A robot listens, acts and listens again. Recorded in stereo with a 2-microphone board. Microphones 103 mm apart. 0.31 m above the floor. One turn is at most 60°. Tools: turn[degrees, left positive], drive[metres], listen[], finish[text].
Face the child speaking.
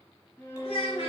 Thought: The child speaking: about 60° left or 120° left.
Action: turn[60]
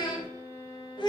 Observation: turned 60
Thought: So it is at 50° left.
Action: turn[50]
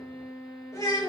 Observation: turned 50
Thought: The child speaking is now 35° left.
Action: turn[35]
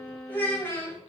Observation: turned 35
Thought: The child speaking is now 25° left.
Action: turn[25]
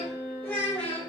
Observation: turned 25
Thought: The child speaking is now 15° left.
Action: turn[15]
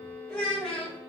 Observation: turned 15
Action: finish[Found it: a child speaking, straight ahead, 1 to 2 m away.]